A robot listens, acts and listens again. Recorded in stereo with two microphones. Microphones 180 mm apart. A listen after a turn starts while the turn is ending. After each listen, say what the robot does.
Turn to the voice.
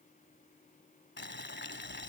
Keep listening.
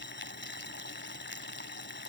Keep listening.
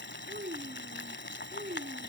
Turn 50° right.
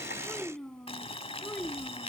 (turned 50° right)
Found it: a child speaking, straight ahead.